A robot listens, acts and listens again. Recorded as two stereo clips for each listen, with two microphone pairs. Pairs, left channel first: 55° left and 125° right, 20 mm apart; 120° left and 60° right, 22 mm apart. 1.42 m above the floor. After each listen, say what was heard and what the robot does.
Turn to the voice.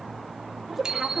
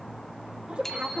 The woman speaking: 65° right. Turn 65° right.
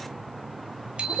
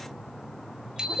Facing the woman speaking, over 4 m away.